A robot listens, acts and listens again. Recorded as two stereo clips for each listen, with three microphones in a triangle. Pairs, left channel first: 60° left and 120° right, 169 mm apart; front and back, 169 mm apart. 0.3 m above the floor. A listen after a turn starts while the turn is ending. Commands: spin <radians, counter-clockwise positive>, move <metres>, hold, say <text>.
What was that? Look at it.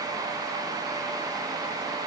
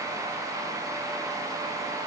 hold
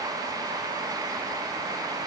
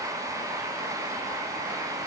hold
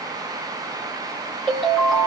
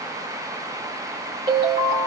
spin 2.62
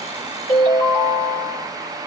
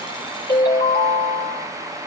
spin 0.17
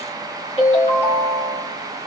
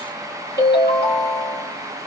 say Found it: a ringtone, straight ahead.